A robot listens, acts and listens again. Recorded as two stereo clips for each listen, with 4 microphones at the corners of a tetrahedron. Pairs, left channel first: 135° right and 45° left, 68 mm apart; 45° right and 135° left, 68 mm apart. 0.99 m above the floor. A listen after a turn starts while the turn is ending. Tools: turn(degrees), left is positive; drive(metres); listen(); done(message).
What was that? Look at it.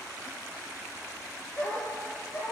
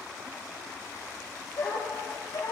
turn(degrees=-85)
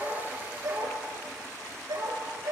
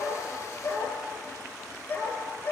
turn(degrees=15)
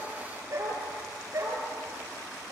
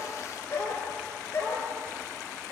turn(degrees=10)
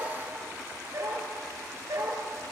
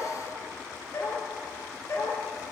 done("Facing the dog barking, over 4 m away.")